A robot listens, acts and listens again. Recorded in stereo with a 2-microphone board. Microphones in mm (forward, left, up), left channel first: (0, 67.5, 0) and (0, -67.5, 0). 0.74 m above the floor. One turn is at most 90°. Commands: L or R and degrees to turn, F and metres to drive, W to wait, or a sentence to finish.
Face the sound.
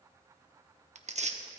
R60
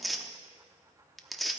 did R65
Facing the tearing paper, under 1 m away.